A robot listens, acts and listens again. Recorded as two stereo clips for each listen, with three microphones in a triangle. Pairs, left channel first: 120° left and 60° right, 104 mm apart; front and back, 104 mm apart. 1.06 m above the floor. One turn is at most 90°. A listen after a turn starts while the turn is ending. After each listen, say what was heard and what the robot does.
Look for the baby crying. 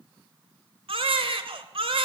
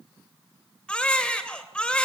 The baby crying: 80° right. Turn 80° right.
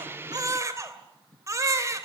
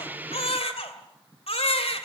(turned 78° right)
Found it: a baby crying, straight ahead, 2 to 4 m away.